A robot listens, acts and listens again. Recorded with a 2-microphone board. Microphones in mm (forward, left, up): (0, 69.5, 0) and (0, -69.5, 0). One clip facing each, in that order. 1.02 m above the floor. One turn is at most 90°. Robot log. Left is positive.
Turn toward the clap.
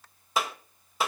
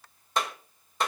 cmd yaw +30
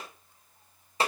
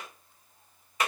note: So it is at 145° left.
cmd yaw +90
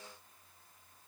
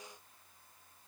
note: Nothing new. It was at 55° left.
cmd yaw +55
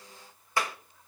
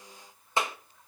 note: The clap is now 20° right.
cmd yaw -20
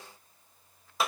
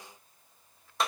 end: Found it: a clap, straight ahead.